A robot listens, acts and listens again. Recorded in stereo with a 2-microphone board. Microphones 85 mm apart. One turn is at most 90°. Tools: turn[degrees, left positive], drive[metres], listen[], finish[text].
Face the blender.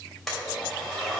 Action: turn[30]
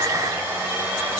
Thought: So it is at 25° right.
Action: turn[-25]
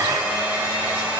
Thought: The blender is now 15° right.
Action: turn[-15]
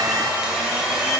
Action: finish[Facing the blender.]